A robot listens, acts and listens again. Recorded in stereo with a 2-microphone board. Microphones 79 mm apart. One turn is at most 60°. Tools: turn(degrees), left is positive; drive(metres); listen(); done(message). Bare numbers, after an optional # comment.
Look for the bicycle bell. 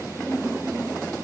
listen()
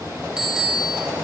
turn(-30)
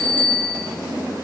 # So it is at 25° left.
turn(25)
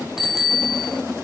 done("Found it: a bicycle bell, straight ahead, 2 to 4 m away.")